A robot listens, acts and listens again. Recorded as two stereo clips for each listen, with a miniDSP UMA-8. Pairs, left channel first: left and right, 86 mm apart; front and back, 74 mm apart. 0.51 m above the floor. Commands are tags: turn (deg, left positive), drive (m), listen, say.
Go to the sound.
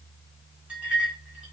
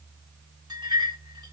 <turn deg="-170"/>
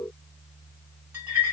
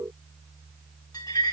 <turn deg="-25"/>
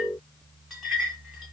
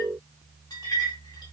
<drive m="1.0"/>
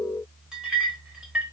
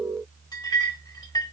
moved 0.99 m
<turn deg="-10"/>
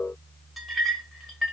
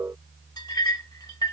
<drive m="1.0"/>
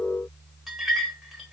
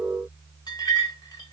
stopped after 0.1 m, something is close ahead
<say>I am next to the clink.</say>